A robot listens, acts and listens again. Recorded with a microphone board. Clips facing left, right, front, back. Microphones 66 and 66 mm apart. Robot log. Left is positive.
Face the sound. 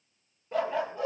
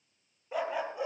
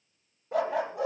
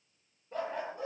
note: The dog barking: 15° right.
cmd yaw -15
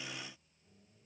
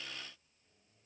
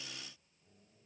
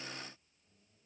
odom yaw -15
cmd idle
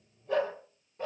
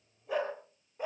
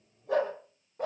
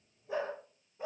note: The dog barking is now 15° right.
cmd yaw -15
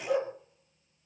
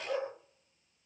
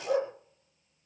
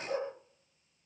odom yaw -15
end: Facing the dog barking, over 4 m away.